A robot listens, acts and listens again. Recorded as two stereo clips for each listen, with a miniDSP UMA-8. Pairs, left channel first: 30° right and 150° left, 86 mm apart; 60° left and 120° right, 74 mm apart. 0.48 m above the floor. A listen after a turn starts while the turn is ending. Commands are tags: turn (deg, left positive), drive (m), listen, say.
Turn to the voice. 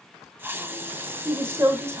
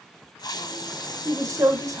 <turn deg="-155"/>
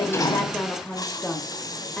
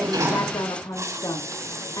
<turn deg="50"/>
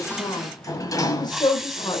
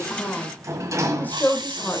<say>Found it: a woman speaking, straight ahead, 1 to 2 m away.</say>